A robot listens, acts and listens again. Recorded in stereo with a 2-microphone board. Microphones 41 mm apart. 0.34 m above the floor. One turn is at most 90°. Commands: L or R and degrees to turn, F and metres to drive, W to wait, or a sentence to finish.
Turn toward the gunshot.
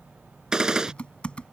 R15
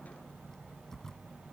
W
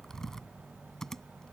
I heard a gunshot, but can't make it out now. It was about straight ahead or 150° right.